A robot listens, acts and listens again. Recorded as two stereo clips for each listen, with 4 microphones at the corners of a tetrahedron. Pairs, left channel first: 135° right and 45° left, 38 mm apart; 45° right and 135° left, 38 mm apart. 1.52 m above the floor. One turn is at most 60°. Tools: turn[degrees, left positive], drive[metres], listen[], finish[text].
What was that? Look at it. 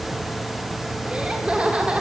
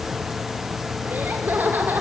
Thought: The laughter: 105° left.
Action: turn[60]
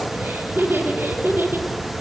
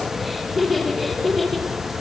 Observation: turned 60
Thought: The laughter is now 45° left.
Action: turn[45]
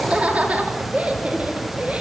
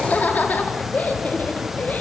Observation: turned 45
Thought: The laughter is now 10° right.
Action: turn[-10]
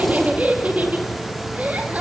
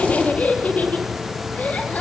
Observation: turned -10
Action: finish[Found it: laughter, straight ahead.]